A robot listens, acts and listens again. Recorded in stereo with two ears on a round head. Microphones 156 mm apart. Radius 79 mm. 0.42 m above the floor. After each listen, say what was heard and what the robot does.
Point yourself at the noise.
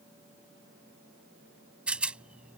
Turn 30° right.
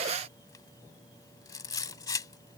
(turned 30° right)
So it is at 20° left. Turn 20° left.
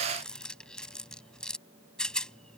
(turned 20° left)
Found it: a rattle, straight ahead.